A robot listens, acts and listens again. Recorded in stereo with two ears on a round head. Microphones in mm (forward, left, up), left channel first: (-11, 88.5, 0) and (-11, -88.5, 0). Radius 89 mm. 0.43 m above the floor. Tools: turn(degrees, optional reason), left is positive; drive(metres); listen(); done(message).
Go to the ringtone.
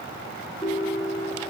turn(degrees=20, reason="The ringtone: about 20° left or 160° left.")
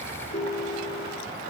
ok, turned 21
turn(degrees=140, reason="So it is at 140° left.")
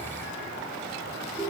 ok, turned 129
turn(degrees=10, reason="The ringtone is now 10° left.")
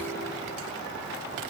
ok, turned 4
listen()
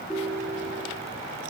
drive(metres=1.0)
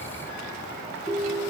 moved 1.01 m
drive(metres=1.0)
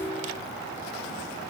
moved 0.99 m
drive(metres=1.0)
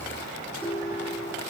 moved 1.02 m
turn(degrees=10, reason="The ringtone is now 10° left.")
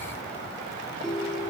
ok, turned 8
drive(metres=1.0)
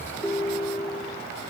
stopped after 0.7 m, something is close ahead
done("I am next to the ringtone.")